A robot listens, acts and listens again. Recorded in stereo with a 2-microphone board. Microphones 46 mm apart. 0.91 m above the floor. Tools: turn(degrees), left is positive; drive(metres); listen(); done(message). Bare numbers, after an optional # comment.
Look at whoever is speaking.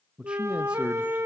# The man speaking: about 25° right or 155° right.
turn(-25)
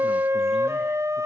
listen()
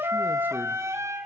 listen()
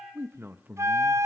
# So it is at 125° right.
turn(-125)
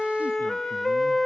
listen()
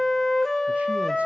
listen()
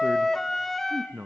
# The man speaking is now 35° right.
turn(-35)
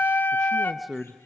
done("Found it: a man speaking, straight ahead, under 1 m away.")